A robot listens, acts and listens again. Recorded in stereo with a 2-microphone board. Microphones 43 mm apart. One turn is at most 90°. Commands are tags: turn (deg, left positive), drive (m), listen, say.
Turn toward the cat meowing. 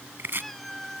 <turn deg="30"/>
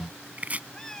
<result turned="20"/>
<turn deg="30"/>
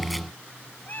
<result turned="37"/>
<turn deg="90"/>
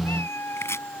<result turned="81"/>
<turn deg="65"/>
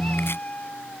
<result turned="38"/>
<turn deg="30"/>
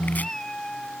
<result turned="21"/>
<turn deg="10"/>
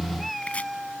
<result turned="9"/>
<say>Found it: a cat meowing, straight ahead.</say>